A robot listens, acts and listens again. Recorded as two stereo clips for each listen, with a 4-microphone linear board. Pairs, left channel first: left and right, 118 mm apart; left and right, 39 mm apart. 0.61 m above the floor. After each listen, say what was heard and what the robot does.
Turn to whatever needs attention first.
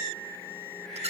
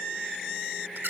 Keep listening.
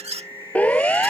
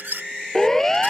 Turn 30° left.
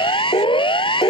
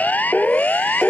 So it is at 135° left. Turn 135° left.
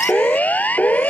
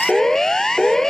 The siren is now 15° left. Turn 15° left.
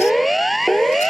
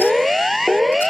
Facing the siren.